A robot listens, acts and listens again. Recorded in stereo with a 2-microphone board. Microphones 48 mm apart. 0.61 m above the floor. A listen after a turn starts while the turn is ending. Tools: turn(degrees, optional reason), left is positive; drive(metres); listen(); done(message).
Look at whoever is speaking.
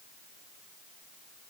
listen()
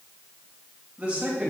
turn(degrees=-30, reason="The man speaking: about 30° right or 150° right.")
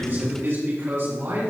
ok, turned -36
turn(degrees=-120, reason="So it is at 120° right.")
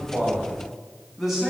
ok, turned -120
done("Facing the man speaking, over 4 m away.")